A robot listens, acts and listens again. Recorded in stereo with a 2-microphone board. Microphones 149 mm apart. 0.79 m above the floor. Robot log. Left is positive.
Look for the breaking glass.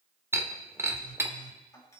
note: The breaking glass: about 15° right or 165° right.
cmd yaw -15
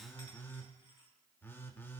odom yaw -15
cmd idle
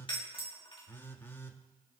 end: I heard breaking glass, but can't make it out now. It was about straight ahead or 150° right.